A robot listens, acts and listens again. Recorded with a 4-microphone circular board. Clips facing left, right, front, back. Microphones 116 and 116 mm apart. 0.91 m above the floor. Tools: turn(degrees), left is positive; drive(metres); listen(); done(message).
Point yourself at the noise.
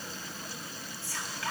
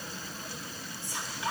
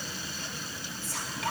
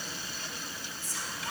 turn(degrees=-20)
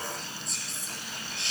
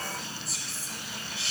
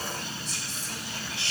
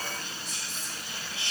done("Facing the whispering.")